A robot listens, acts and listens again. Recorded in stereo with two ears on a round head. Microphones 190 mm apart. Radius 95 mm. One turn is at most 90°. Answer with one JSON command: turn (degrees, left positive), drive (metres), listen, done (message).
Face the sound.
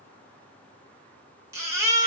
{"turn": -30}
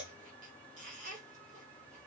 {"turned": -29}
{"listen": true}
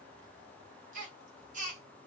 {"turn": -90}
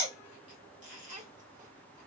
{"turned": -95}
{"turn": -40}
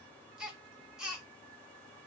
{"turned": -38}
{"done": "Found it: a baby crying, straight ahead, 1 to 2 m away."}